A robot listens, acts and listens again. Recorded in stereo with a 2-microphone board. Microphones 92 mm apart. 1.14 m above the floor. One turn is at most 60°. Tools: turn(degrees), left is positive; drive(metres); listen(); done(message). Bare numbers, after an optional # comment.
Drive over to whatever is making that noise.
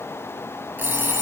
# The alarm clock: about 25° right or 155° right.
turn(-25)
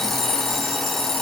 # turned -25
drive(1.0)
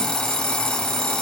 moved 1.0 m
# The alarm clock is now 10° left.
turn(10)
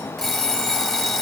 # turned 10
drive(1.0)
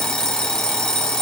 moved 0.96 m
drive(1.0)
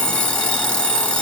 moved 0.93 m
# The alarm clock is now 15° left.
turn(15)
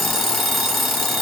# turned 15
drive(1.0)
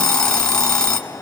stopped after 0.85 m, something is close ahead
# The alarm clock is now 10° left.
turn(10)
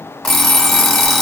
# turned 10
done("I am next to the alarm clock.")